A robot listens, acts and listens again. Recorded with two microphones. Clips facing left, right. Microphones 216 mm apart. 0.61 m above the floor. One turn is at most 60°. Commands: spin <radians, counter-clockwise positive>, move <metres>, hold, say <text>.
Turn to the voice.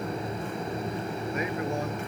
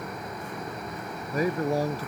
spin -0.61
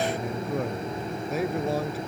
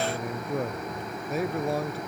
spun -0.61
say Facing the man speaking.